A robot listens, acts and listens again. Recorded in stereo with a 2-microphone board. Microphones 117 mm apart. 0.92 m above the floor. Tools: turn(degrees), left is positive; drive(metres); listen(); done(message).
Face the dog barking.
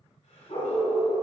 turn(degrees=65)
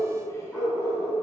turn(degrees=10)
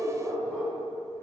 done("Facing the dog barking, 2 to 4 m away.")